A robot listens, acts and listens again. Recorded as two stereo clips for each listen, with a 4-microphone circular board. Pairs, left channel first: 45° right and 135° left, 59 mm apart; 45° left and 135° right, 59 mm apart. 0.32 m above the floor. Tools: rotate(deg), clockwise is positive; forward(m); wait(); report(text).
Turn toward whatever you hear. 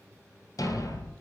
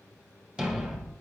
rotate(55)
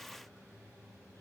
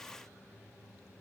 report("I heard a thud from this way, but can't make it out now.")